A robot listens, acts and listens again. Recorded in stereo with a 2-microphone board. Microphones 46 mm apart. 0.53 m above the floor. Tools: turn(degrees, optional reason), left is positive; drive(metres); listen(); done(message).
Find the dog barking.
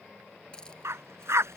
turn(degrees=-90)
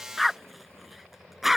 done("Found it: a dog barking, straight ahead.")